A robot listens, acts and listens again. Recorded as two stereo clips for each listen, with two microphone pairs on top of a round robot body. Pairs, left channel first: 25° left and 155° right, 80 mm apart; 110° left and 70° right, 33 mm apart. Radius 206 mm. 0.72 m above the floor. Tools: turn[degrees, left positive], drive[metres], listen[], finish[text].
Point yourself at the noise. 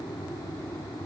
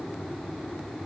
Action: listen[]
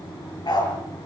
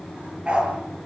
Thought: The dog barking: 10° right.
Action: turn[-10]
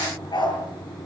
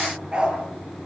Action: finish[Facing the dog barking.]